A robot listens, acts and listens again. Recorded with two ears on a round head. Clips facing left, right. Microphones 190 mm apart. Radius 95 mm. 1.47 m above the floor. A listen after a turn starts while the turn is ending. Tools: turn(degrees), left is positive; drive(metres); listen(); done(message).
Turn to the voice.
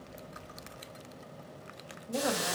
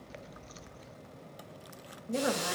turn(degrees=-25)
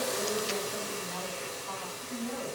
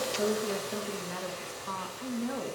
turn(degrees=-105)
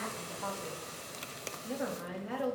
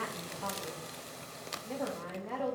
turn(degrees=15)
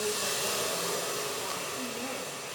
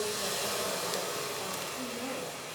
listen()
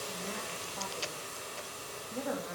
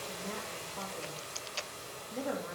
done("Found it: a woman speaking, straight ahead, 2 to 4 m away.")